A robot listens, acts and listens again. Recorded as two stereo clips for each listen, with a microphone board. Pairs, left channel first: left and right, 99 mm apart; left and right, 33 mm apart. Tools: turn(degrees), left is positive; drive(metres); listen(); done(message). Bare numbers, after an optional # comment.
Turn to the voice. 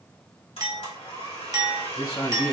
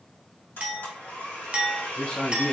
# The man speaking: about 55° left or 125° left.
turn(55)
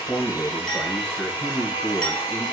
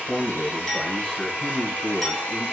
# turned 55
# So it is at 10° left.
turn(10)
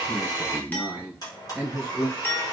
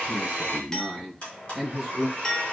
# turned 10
done("Found it: a man speaking, straight ahead, 1 to 2 m away.")